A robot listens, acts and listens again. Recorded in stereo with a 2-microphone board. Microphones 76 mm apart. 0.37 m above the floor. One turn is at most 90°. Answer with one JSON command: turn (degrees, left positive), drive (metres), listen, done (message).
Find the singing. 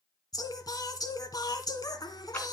{"turn": 55}
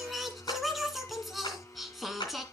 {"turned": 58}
{"done": "Found it: singing, straight ahead."}